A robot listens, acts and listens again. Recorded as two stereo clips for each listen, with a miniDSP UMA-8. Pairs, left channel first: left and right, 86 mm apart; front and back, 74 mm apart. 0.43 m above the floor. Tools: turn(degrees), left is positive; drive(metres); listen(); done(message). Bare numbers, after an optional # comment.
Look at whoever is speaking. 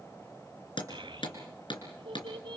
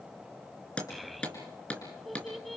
# The child speaking: 90° right.
turn(-90)
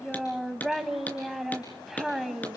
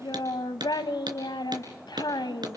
done("Facing the child speaking, 1 to 2 m away.")